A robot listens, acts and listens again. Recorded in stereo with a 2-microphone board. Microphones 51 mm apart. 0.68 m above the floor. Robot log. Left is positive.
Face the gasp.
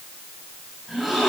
cmd yaw -30
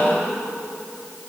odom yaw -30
cmd idle
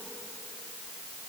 end: I heard a gasp, but can't make it out now. It was about 25° left or 145° right.